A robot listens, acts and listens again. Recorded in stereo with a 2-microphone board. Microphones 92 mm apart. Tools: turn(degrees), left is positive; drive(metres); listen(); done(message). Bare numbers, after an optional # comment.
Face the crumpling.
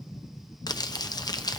# The crumpling: about 45° left or 135° left.
turn(45)
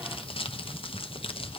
# So it is at 90° left.
turn(90)
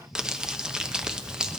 # The crumpling is now 10° right.
turn(-10)
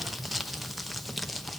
done("Found it: crumpling, straight ahead, under 1 m away.")